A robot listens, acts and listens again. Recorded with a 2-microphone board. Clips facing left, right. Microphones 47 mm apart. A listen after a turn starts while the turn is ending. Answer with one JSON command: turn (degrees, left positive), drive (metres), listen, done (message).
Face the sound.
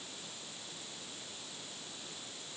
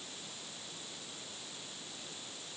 {"listen": true}
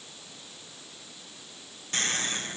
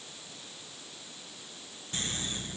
{"turn": 90}
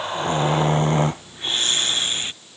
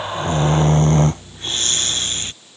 {"turn": 10}
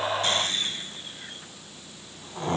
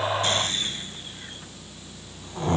{"done": "Found it: snoring, straight ahead."}